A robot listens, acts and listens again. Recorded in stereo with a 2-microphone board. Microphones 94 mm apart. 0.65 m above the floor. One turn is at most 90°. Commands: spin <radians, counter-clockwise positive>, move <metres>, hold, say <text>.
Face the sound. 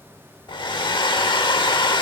spin 1.05
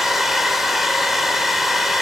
say Facing the hair dryer.